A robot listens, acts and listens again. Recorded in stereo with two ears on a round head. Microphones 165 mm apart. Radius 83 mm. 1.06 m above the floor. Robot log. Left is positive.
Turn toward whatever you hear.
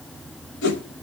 note: The whoosh: about 70° left or 110° left.
cmd yaw +70
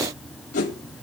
note: So it is at 45° left.
cmd yaw +45
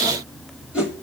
end: Found it: a whoosh, straight ahead.